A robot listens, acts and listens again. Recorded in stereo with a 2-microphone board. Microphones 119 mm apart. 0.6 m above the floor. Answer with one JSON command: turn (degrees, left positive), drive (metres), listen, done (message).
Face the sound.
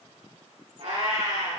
{"turn": -75}
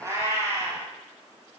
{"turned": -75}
{"turn": -30}
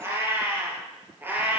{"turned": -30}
{"turn": -15}
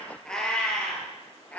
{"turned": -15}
{"turn": 10}
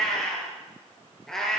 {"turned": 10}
{"done": "Facing the cat meowing, 2 to 4 m away."}